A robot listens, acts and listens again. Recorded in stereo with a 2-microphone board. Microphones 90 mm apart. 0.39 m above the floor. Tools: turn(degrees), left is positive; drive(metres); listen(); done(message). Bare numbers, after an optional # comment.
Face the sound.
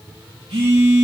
turn(-90)
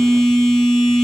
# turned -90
done("Facing the phone buzzing, over 4 m away.")